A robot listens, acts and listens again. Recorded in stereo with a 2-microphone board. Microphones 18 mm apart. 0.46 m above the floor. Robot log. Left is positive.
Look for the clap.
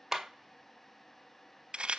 cmd yaw -30
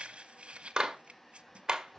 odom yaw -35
note: So it is at 135° right.
cmd yaw -135
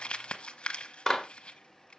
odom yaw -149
note: The clap is now 10° left.
cmd yaw +10
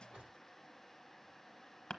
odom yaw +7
cmd idle
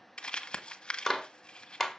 end: Facing the clap, 1 to 2 m away.